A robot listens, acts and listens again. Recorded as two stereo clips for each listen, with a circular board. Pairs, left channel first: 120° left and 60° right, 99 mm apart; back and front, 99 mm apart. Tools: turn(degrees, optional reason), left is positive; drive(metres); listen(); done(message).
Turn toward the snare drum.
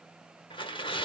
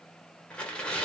listen()
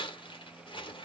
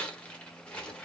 listen()
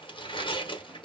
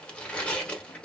done("I can't make out a snare drum to turn to.")